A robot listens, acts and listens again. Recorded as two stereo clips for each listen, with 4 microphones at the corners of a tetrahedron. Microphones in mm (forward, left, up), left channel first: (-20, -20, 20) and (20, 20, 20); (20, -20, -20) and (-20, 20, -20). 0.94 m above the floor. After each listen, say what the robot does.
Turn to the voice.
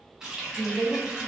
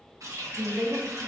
Turn 180° left.
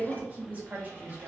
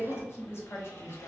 Turn 10° right.
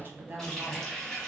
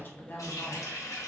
Facing the woman speaking, under 1 m away.